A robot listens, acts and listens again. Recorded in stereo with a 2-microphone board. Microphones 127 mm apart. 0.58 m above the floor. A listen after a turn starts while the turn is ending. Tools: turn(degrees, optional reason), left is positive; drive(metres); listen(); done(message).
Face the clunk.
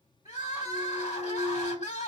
turn(degrees=45, reason="The clunk: about 45° left or 135° left.")
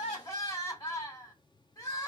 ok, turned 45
listen()
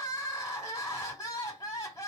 done("I heard a clunk, but can't make it out now. It was about straight ahead or 90° left.")